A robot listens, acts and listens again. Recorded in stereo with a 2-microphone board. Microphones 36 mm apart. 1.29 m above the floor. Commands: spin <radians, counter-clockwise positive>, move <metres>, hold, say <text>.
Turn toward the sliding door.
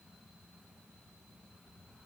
hold
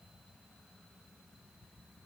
hold
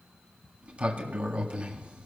spin -0.61
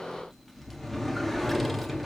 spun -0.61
say Found it: a sliding door, straight ahead.